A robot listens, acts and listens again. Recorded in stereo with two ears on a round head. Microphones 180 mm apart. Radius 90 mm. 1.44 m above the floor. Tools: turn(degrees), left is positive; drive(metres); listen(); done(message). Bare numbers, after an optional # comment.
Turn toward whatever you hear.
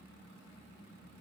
listen()
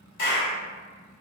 # The clap: about 55° left or 125° left.
turn(55)
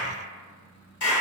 # So it is at 65° left.
turn(65)
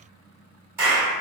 # The clap is now 15° right.
turn(-15)
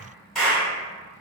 done("Facing the clap.")